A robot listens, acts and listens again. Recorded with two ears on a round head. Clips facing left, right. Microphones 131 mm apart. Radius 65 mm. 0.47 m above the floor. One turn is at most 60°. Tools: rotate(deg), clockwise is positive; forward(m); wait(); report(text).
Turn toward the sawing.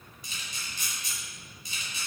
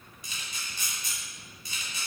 wait()
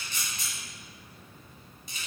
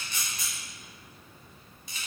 wait()
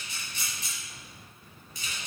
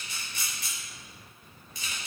report("I can't make out sawing to turn to.")